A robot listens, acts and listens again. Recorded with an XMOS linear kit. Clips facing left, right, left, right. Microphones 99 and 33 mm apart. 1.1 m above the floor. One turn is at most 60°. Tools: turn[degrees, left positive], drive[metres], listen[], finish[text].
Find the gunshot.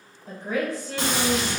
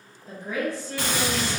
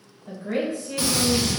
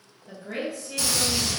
Thought: The gunshot: about 20° left or 160° left.
Action: turn[20]
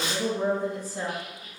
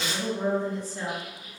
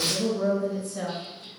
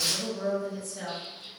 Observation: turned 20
Thought: So it is at 140° left.
Action: turn[60]
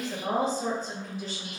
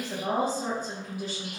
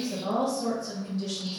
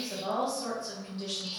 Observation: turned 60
Thought: Nothing new. It was at 80° left.
Action: turn[60]
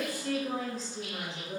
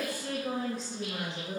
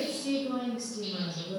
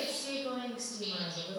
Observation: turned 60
Thought: Nothing new. It was at 20° left.
Action: turn[20]
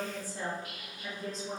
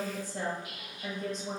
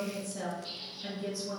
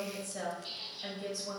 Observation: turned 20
Action: finish[Facing where the gunshot came from. I can't hear it now.]